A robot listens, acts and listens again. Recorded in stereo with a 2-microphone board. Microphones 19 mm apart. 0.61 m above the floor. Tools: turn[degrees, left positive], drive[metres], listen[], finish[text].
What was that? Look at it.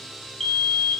Thought: The fire alarm: about 20° left or 160° left.
Action: turn[20]
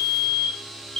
Thought: So it is at 140° left.
Action: turn[140]
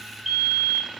Thought: The fire alarm is now 15° right.
Action: turn[-15]
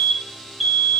Action: finish[Found it: a fire alarm, straight ahead.]